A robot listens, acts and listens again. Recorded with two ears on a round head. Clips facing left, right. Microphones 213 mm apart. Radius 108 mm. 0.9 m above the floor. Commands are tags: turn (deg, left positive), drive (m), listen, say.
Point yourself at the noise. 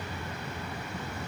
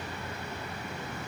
<listen/>
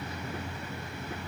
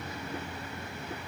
<listen/>
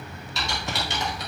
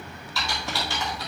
<turn deg="20"/>
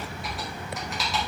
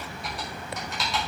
<say>Found it: typing on a keyboard, straight ahead, over 4 m away.</say>